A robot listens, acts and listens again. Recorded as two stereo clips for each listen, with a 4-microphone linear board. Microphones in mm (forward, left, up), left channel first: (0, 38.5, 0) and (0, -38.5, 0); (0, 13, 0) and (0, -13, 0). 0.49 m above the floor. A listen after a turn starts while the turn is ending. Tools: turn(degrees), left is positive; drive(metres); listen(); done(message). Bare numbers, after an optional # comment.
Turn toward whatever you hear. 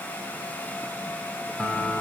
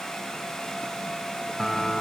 turn(30)
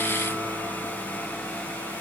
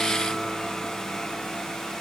listen()
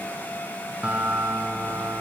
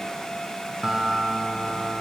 # So it is at 15° right.
turn(-15)
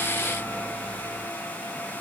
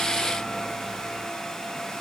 listen()
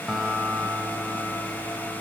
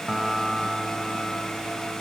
done("Facing the guitar, 2 to 4 m away.")